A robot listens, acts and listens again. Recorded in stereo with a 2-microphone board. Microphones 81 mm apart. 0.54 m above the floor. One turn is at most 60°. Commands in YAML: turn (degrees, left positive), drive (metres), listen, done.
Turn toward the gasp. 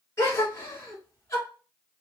turn: 35
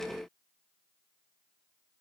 listen: true
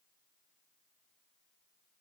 done: "I heard a gasp, but can't make it out now. It was about straight ahead or 110° left."